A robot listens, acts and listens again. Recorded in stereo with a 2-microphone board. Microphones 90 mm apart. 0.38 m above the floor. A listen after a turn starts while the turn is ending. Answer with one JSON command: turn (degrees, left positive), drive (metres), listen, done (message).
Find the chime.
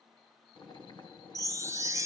{"turn": -35}
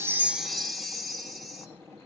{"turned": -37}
{"done": "Facing the chime."}